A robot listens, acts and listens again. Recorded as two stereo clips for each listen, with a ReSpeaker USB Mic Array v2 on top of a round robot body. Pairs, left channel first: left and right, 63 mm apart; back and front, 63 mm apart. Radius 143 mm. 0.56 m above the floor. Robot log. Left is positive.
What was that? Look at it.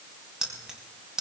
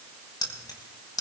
note: The keys jangling: 170° right.
cmd yaw -170
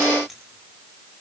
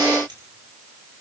cmd idle
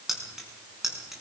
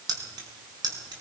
end: Facing the keys jangling, over 4 m away.